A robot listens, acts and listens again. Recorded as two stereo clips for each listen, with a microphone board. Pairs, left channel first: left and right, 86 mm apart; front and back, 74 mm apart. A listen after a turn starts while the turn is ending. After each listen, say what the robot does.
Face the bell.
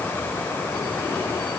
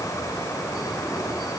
Keep listening.
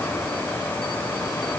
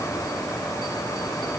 Keep listening.
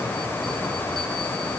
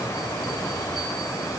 I can't make out a bell to turn to.